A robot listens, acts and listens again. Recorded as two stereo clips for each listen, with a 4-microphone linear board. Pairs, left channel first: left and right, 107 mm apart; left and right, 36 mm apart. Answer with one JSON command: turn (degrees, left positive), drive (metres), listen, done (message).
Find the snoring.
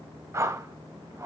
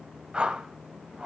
{"listen": true}
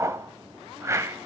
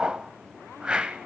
{"listen": true}
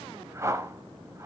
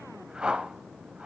{"done": "I can't make out snoring to turn to."}